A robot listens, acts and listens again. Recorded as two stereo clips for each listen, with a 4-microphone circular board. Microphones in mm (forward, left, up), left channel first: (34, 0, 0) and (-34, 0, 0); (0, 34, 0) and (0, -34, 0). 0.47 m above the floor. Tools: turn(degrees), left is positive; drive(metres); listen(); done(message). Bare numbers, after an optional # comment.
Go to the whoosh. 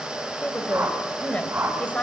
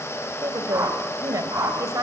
# The whoosh: 130° right.
turn(-130)
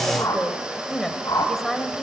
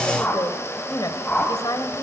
# The whoosh is now 25° left.
turn(25)
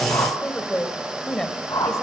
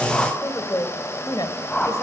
# The whoosh is now 20° left.
turn(20)
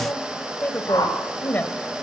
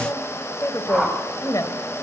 drive(1.0)
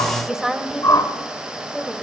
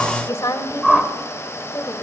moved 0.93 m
drive(1.0)
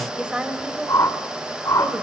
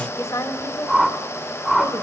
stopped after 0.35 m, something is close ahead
done("Arrived at the whoosh, straight ahead.")